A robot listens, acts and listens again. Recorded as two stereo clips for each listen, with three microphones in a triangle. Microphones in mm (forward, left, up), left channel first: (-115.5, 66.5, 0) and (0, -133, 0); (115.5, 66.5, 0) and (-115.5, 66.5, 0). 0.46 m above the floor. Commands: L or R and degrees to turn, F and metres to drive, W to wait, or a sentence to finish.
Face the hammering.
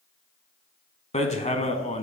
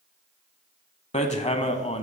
L65
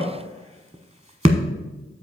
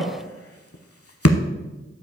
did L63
Found it: hammering, straight ahead, under 1 m away.